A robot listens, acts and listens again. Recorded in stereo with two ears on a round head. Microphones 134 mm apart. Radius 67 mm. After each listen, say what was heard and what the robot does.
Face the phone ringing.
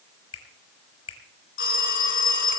The phone ringing: about 70° left or 110° left. Turn 70° left.
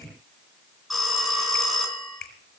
Facing the phone ringing, 2 to 4 m away.